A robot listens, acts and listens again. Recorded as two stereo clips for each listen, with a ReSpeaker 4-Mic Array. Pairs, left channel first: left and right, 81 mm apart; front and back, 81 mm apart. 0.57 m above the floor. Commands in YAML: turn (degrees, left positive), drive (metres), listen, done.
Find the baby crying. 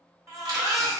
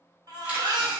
turn: -140
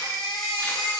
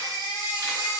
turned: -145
done: "Facing the baby crying, 1 to 2 m away."